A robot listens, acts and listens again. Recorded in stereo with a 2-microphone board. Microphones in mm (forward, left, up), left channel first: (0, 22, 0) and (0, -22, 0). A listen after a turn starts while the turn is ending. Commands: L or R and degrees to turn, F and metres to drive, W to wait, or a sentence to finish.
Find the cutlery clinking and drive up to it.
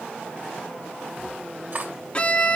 R50
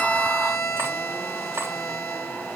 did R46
W
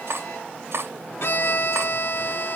R85
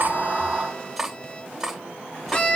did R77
F1.0
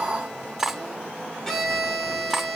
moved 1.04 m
F1.0
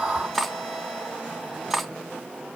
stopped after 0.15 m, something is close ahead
I am next to the cutlery clinking.